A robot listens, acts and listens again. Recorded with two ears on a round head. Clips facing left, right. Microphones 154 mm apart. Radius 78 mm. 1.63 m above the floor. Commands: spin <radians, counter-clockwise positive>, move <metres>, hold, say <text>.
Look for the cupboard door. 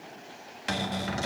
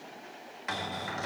spin 0.61
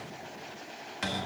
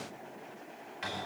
spin 1.83
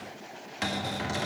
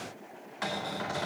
spin 0.52
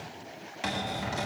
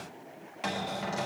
say Facing the cupboard door.